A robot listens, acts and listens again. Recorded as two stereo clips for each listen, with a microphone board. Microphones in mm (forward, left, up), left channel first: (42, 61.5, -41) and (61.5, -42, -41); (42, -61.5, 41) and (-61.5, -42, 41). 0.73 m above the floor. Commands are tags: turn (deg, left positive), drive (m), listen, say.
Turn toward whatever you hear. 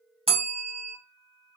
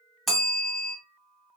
<turn deg="-100"/>
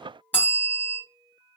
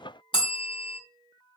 <turn deg="25"/>
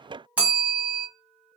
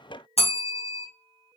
<say>Found it: a bell, straight ahead, under 1 m away.</say>